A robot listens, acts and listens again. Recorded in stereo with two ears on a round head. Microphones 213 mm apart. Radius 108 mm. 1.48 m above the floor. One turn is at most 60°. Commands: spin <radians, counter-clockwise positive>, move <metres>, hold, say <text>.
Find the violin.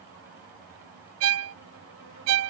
spin -1.05
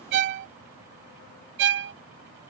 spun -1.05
spin -0.87
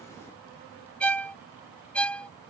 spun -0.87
say Found it: a violin, straight ahead.